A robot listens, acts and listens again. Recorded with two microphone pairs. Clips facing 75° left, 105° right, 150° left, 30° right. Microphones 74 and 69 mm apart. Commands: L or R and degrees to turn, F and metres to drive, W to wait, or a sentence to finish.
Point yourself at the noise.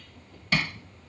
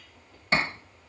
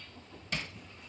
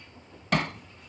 R50
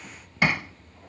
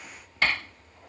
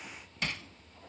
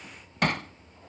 Facing the hammering.